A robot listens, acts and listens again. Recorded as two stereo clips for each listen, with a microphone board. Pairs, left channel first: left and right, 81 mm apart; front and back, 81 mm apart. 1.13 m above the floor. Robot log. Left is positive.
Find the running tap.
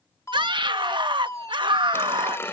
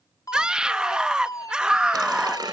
note: The running tap: 150° left.
cmd yaw +150
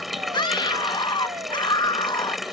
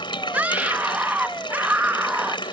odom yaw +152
end: Facing the running tap.